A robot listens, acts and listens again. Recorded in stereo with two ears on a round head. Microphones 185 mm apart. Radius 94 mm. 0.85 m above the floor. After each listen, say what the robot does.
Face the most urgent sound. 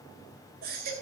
Turn 50° right.
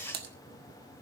Keep listening.
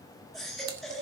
Found it: a baby crying, straight ahead, over 4 m away.